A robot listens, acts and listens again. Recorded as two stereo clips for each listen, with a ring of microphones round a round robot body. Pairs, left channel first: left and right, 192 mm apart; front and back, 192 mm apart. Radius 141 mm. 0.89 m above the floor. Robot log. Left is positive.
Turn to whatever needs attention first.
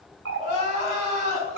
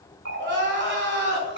note: The crying: 155° left.
cmd yaw +155
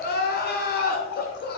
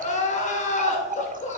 note: The crying is now 55° left.
cmd yaw +55
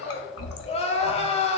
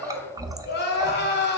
note: The crying is now 30° left.
cmd yaw +30
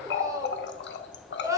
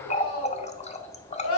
note: The crying is now 15° right.
cmd yaw -15
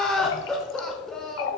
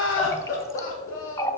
end: Found it: crying, straight ahead.